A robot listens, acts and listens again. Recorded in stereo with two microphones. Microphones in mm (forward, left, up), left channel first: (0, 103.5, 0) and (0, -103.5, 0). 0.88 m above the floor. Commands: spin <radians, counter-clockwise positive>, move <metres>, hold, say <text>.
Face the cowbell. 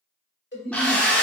spin 1.05
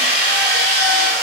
hold
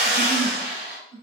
hold
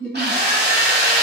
say I heard a cowbell, but can't make it out now. It was about straight ahead or 60° left.